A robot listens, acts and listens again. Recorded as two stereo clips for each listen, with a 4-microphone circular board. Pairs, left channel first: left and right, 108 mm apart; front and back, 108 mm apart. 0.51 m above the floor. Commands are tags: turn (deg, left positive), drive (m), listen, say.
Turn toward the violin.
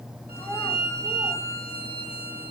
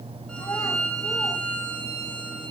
<turn deg="80"/>
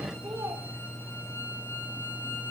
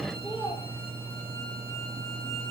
<listen/>
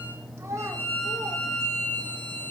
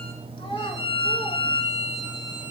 <turn deg="20"/>
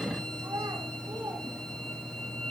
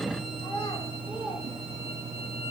<listen/>
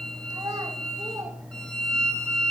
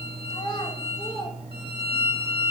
<turn deg="10"/>
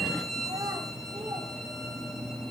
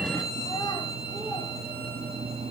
<say>Facing the violin, 2 to 4 m away.</say>